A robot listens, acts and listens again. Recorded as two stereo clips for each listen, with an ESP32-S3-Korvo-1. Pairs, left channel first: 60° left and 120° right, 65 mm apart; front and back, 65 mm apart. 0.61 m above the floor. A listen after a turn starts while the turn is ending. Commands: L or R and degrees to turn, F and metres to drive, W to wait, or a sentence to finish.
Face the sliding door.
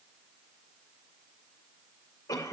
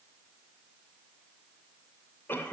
W
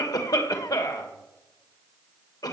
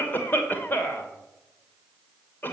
W
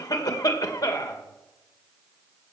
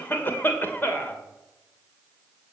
I can't make out a sliding door to turn to.